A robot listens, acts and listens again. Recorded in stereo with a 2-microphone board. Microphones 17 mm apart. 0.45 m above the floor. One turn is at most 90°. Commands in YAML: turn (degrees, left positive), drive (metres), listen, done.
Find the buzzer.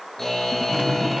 turn: 20
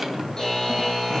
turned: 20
turn: 90
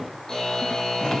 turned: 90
turn: 50
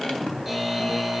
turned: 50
turn: -10
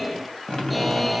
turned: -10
done: "Found it: a buzzer, straight ahead, over 4 m away."